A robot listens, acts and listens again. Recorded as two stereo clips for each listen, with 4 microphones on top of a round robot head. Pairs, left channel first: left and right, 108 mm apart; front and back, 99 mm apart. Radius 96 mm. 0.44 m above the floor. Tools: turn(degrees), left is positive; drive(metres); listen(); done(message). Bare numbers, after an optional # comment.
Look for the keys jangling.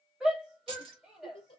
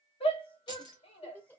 # The keys jangling: 50° right.
turn(-50)
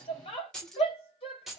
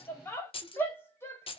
done("Facing the keys jangling.")